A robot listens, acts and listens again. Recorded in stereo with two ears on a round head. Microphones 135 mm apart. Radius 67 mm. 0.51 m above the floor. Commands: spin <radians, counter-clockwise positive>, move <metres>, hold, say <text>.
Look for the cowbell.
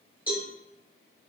spin -0.52
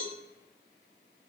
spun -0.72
spin 0.52
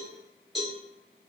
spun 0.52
say Found it: a cowbell, straight ahead, 1 to 2 m away.